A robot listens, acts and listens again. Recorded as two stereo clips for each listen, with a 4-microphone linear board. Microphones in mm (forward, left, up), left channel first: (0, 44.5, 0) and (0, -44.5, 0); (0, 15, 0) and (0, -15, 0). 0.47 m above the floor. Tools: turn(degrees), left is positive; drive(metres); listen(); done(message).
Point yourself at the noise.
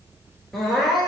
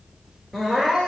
turn(degrees=30)
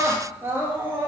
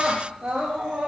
turn(degrees=-25)
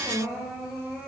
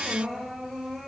done("Found it: crying, straight ahead.")